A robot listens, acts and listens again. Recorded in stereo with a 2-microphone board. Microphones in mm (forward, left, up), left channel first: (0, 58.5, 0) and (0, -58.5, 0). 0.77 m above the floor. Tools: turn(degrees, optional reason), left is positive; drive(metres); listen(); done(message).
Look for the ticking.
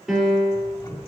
turn(degrees=30, reason="The ticking: about 30° left or 150° left.")
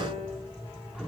done("Found it: ticking, straight ahead.")